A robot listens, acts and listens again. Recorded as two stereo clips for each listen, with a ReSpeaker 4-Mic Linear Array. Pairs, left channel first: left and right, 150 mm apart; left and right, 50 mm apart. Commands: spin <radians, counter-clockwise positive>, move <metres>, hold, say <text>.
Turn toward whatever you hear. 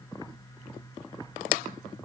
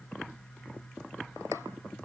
hold
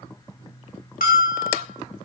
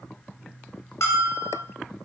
spin 1.22
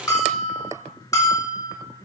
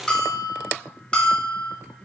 spin 0.44
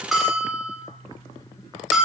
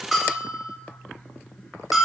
say Facing the bell.